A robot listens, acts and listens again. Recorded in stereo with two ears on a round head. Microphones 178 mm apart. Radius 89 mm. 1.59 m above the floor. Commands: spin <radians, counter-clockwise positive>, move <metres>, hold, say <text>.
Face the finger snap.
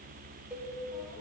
hold
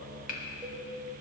spin 0.79
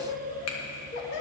spin 1.66
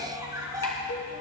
hold
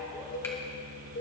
hold
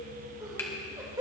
say Facing where the finger snap came from. I can't hear it now.